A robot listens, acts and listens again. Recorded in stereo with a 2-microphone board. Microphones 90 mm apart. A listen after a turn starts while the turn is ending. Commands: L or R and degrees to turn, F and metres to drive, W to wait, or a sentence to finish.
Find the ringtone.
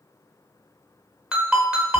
R30
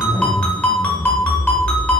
L20
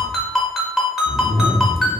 Facing the ringtone, under 1 m away.